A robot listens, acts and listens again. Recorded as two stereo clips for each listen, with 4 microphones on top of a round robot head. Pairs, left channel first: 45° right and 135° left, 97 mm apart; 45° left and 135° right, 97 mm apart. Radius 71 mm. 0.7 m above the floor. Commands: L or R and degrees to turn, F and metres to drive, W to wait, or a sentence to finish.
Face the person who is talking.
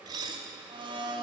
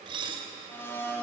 W
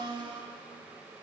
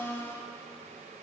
W
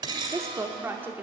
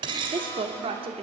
R155
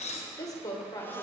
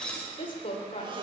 L10
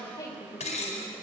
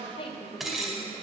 Facing the woman speaking.